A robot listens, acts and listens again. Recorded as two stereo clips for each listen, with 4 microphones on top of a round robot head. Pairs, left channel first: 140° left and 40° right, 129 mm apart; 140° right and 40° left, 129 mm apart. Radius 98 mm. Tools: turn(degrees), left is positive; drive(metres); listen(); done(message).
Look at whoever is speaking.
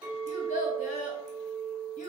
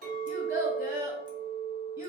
turn(degrees=110)
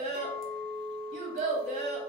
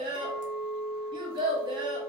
turn(degrees=-15)
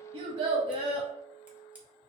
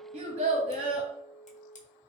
done("Facing the child speaking, under 1 m away.")